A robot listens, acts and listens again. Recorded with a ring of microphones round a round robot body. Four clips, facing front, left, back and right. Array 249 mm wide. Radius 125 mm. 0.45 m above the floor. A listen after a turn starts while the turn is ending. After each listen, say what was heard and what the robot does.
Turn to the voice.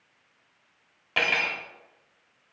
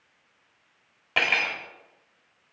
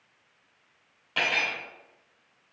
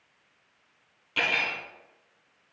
Keep listening.
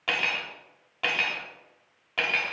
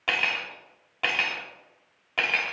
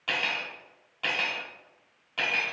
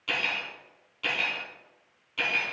Keep listening.
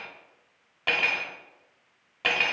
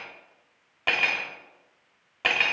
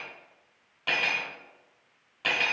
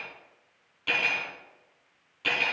I can't make out anyone speaking to turn to.